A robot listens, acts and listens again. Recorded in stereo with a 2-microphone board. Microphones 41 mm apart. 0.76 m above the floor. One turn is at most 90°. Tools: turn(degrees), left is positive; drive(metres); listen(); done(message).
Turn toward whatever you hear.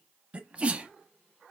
turn(degrees=-30)
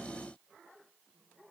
listen()
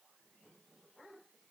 done("I heard a sneeze, but can't make it out now. It was about straight ahead or 120° right.")